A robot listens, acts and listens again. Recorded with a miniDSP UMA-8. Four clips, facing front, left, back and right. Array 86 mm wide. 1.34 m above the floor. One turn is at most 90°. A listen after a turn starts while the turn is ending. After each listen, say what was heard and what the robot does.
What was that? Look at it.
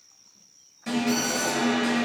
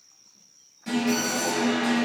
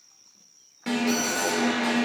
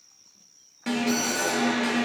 The alarm: 140° right. Turn 90° right.
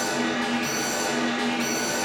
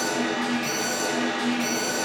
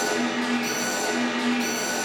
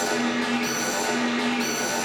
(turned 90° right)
The alarm is now 80° right. Turn 80° right.
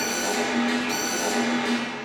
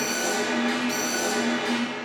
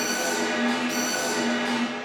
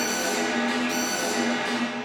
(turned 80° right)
Found it: an alarm, straight ahead, 2 to 4 m away.